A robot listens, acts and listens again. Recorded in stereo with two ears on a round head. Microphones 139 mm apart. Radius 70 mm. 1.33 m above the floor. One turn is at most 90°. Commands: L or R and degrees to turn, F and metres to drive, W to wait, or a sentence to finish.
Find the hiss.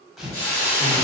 L30
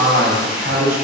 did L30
W
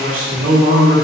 W
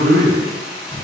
R15
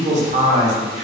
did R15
W
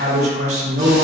W
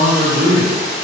Facing the hiss.